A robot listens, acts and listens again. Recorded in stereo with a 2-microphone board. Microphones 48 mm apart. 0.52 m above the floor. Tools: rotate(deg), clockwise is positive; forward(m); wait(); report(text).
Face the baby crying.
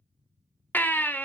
rotate(-40)
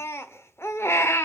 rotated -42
rotate(-90)
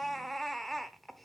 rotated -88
report("Found it: a baby crying, straight ahead.")